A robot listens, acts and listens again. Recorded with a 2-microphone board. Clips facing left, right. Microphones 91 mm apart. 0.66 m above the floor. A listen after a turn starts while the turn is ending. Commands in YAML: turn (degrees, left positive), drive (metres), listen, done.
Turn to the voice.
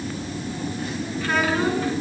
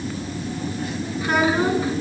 turn: -15
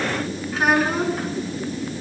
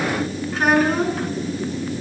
done: "Facing the child speaking, over 4 m away."